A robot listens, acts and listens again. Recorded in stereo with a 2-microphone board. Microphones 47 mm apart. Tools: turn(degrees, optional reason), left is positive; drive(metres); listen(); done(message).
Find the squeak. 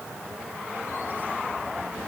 listen()
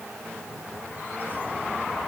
listen()
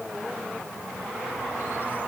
done("I can't make out a squeak.")